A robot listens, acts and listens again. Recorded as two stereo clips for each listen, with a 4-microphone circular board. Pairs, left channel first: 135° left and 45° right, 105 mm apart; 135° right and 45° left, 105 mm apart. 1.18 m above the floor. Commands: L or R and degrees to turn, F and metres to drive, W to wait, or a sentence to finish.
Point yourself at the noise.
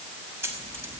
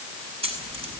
L25
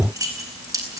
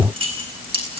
L15
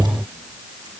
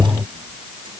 W
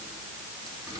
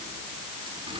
W
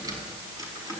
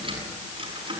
L10
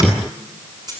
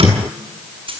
L10
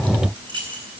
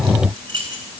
Found it: keys jangling, straight ahead.